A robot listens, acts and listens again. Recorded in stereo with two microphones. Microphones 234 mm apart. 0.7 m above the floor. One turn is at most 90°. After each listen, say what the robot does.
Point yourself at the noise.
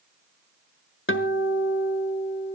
Turn 60° left.
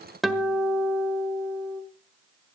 Found it: a guitar, straight ahead, 1 to 2 m away.